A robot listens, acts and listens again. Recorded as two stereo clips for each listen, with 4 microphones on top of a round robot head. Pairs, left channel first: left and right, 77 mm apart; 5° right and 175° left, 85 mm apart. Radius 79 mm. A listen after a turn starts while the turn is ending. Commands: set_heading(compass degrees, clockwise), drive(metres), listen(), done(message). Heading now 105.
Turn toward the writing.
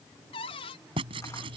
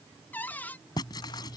set_heading(165)
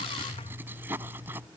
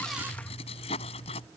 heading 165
set_heading(185)
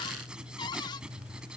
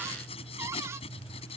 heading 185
set_heading(195)
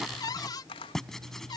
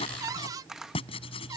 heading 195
done("Found it: writing, straight ahead.")